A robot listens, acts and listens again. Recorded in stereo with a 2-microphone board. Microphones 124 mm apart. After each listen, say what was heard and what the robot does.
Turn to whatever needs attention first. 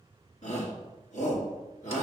The shout: about 75° left or 105° left. Turn 75° left.
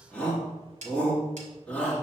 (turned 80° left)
So it is at 10° left. Turn 10° left.
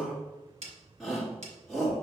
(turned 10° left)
Facing the shout, 1 to 2 m away.